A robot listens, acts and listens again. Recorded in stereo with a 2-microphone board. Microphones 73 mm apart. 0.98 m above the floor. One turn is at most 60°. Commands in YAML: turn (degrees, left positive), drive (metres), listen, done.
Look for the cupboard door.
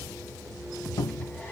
turn: 55
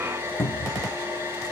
turn: 35
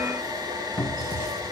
done: "Facing the cupboard door."